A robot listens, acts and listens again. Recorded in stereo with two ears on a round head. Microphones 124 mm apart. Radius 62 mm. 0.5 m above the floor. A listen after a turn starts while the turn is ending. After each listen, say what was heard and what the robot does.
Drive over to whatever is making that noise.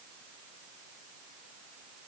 Keep listening.
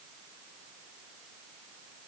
Keep listening.
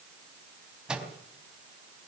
Turn 30° right.
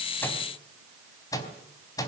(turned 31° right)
So it is at 25° left. Turn 25° left.
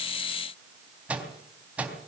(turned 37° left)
The microwave is now 10° right. Turn 10° right.
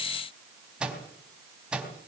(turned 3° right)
Drive 1.0 m forward.
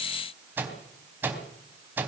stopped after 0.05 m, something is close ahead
The microwave is now 15° right. Turn 15° right.
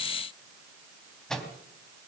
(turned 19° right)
Blocked. The microwave is further on, straight ahead.